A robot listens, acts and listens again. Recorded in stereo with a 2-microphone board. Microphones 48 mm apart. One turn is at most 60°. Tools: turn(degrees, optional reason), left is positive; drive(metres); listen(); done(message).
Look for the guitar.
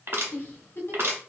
listen()
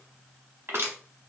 listen()
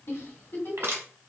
done("I can't make out a guitar, only a giggle and crushing.")